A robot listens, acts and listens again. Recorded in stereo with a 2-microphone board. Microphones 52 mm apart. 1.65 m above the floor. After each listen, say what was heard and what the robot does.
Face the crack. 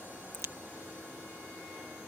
Turn 90° right.
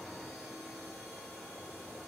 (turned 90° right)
Facing where the crack came from. I can't hear it now.